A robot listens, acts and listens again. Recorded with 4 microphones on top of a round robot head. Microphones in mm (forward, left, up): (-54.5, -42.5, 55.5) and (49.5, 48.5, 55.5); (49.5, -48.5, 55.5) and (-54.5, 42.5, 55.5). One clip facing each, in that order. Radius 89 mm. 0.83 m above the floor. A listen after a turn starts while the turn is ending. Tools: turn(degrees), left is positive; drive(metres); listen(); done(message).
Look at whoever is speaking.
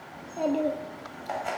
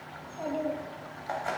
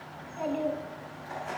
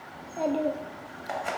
turn(degrees=-170)
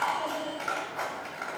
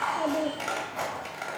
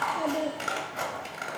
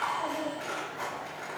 listen()
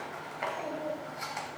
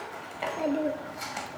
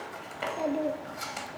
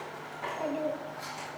turn(degrees=20)
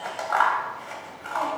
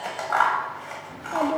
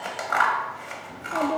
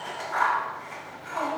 done("Facing the child speaking, under 1 m away.")